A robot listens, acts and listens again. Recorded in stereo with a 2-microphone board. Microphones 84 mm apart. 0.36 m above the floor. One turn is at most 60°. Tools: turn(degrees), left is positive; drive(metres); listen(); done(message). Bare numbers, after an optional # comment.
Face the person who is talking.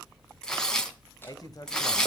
# The man speaking: about 50° left or 130° left.
turn(50)
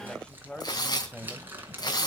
# So it is at 15° left.
turn(15)
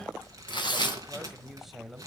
done("Found it: a man speaking, straight ahead.")